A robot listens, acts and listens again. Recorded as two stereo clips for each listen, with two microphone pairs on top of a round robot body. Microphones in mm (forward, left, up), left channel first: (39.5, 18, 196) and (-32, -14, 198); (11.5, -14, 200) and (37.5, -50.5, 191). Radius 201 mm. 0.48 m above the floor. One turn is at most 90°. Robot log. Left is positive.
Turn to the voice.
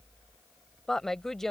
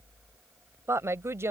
note: The woman speaking: 60° right.
cmd yaw -60
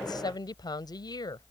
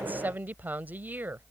note: The woman speaking is now 10° right.
cmd yaw -10
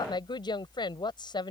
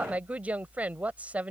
end: Found it: a woman speaking, straight ahead.